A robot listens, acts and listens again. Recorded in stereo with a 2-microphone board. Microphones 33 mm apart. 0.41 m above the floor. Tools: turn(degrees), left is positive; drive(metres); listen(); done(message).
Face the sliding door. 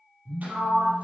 turn(degrees=-50)
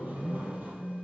turn(degrees=-80)
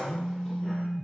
done("Found it: a sliding door, straight ahead.")